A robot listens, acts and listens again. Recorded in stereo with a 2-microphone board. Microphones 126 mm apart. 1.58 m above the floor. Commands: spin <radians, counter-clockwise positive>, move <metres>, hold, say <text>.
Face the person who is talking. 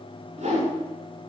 hold
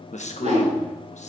spin 1.22
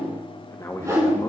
spin 0.44
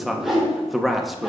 say Found it: a man speaking, straight ahead, 1 to 2 m away.